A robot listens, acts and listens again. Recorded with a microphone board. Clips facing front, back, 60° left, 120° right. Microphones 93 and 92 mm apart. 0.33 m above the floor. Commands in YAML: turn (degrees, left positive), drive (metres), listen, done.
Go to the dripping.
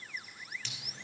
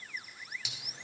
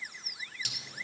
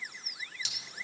turn: 100
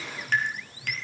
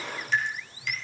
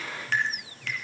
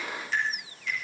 turn: 35
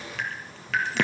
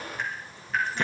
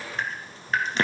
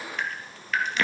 drive: 1.0
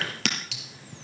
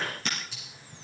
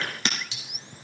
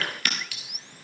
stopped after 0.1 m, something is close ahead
turn: -10
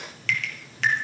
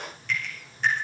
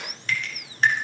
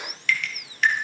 done: "Something is in my way. I am facing the dripping but have not reached it."